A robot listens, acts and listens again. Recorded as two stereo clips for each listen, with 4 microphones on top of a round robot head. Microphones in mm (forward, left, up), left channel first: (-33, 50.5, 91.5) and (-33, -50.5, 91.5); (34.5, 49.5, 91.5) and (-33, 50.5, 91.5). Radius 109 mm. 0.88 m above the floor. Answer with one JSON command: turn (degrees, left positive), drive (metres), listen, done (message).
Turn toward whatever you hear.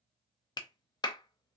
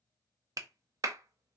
{"turn": 140}
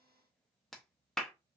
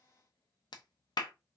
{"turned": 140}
{"done": "Facing the clap, under 1 m away."}